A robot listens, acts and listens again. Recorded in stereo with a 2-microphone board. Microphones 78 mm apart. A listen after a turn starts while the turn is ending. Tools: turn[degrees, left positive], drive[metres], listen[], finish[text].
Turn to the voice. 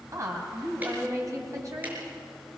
Thought: The woman speaking: about 45° right or 135° right.
Action: turn[-45]
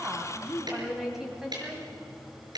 Action: finish[Facing the woman speaking, 2 to 4 m away.]